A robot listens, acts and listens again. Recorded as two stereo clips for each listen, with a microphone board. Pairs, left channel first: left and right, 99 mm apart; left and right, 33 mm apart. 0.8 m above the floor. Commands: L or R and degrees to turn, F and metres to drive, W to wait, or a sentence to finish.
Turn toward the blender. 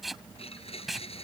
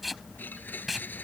L90
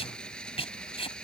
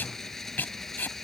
L10
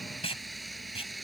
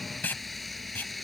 Found it: a blender, straight ahead.